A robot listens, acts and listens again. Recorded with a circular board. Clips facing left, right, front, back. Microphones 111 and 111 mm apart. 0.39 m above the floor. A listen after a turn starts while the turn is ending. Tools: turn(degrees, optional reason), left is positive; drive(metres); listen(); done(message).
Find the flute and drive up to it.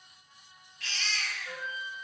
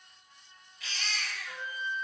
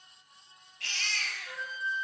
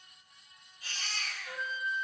turn(degrees=85, reason="The flute: 85° left.")
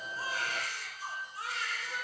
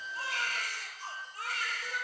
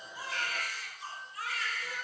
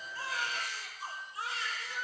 turn(degrees=-25, reason="The flute is now 25° right.")
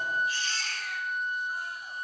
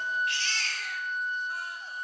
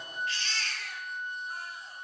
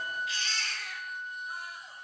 drive(metres=1.0)
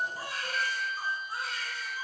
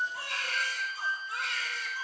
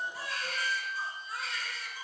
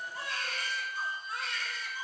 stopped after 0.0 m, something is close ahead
done("Something is in my way. I am facing the flute but have not reached it.")